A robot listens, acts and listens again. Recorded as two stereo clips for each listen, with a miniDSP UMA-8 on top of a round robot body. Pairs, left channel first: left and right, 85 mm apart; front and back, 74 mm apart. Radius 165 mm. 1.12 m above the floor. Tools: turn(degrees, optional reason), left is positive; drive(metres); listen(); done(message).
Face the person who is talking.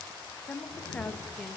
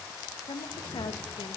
turn(degrees=15, reason="The woman speaking: 15° left.")
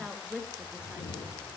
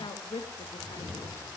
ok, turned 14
turn(degrees=-10, reason="The woman speaking is now 10° right.")
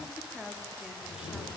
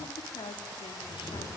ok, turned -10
done("Facing the woman speaking.")